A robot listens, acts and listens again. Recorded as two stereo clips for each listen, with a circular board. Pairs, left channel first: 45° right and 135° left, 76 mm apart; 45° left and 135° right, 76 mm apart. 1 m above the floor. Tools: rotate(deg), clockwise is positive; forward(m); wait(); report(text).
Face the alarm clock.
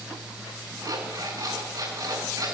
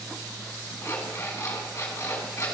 rotate(-100)
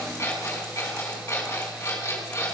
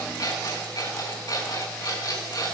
rotate(-10)
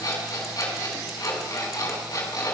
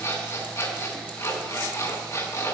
report("Found it: an alarm clock, straight ahead.")